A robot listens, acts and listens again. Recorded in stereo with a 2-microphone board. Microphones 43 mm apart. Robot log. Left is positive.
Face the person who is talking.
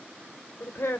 note: The woman speaking: about 70° left or 110° left.
cmd yaw +70
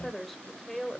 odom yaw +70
end: Found it: a woman speaking, straight ahead, 2 to 4 m away.